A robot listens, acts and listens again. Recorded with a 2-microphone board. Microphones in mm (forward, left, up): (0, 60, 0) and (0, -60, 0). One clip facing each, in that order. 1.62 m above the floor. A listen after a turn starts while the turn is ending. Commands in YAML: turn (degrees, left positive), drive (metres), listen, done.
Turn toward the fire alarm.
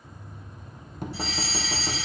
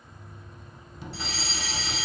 turn: -70
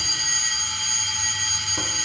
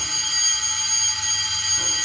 turn: -10
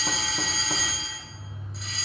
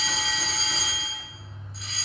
done: "Found it: a fire alarm, straight ahead, 1 to 2 m away."